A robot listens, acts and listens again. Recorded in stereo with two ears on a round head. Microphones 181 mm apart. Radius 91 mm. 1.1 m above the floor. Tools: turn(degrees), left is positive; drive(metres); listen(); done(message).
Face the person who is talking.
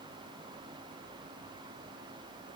listen()
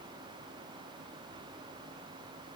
listen()
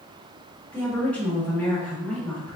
turn(degrees=30)
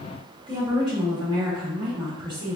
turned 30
turn(degrees=-20)
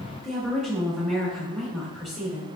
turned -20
done("Facing the woman speaking, 1 to 2 m away.")